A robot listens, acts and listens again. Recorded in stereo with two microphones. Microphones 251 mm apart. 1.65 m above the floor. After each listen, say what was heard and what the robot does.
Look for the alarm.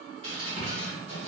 Keep listening.
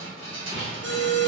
The alarm: about 50° right or 130° right. Turn 50° right.
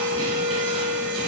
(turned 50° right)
Found it: an alarm, straight ahead.